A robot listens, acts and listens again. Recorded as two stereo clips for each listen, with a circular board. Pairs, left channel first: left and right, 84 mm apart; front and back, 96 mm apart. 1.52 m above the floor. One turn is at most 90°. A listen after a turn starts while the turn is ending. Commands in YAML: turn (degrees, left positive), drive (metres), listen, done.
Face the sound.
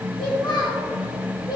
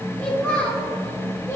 turn: 65
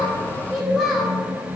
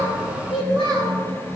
turn: -10
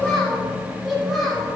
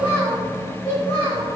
done: "Facing the child speaking."